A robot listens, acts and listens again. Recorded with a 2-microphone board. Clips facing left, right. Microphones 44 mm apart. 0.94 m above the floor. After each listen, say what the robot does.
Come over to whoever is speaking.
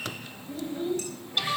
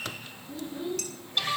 Turn 45° left.
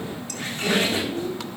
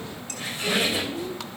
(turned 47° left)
Turn 85° left.
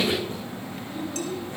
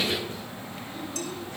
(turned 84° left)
Drive 1.0 m forward.
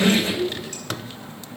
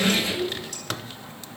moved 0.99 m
Drive 1.0 m forward.
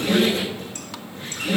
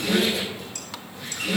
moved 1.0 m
Keep listening.
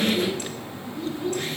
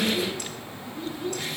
Drive 1.0 m forward.
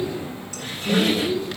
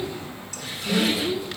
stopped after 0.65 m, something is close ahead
Turn 10° right.
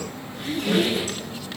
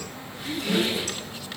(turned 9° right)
Arrived at the child speaking, straight ahead.